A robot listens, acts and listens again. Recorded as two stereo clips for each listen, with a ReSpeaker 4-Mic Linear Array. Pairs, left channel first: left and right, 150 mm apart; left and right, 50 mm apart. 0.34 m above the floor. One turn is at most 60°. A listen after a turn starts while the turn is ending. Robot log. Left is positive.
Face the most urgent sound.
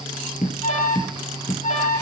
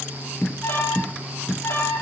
note: The alarm: about 55° left or 125° left.
cmd yaw +55
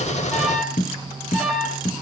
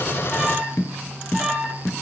end: Facing the alarm.